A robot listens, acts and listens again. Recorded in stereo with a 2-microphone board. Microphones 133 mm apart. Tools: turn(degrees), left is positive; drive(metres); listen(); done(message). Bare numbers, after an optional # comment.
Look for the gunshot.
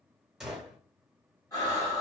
turn(30)
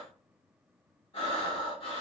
listen()
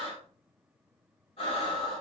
done("I heard a gunshot, but can't make it out now. It was about 30° right or 150° left.")